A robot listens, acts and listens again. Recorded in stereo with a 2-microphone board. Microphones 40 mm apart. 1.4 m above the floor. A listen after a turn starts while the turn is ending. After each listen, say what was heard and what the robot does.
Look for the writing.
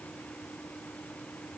Keep listening.
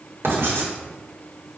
Turn 90° right.
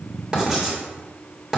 So it is at 15° right. Turn 15° right.
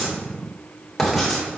Facing the writing.